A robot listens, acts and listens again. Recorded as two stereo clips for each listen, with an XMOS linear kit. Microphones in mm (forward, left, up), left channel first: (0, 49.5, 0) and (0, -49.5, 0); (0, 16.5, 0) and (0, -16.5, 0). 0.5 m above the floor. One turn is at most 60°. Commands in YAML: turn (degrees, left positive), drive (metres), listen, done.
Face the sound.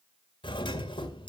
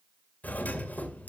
turn: 55
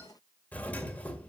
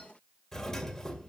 turn: 20
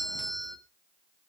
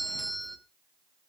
done: "Found it: a doorbell, straight ahead."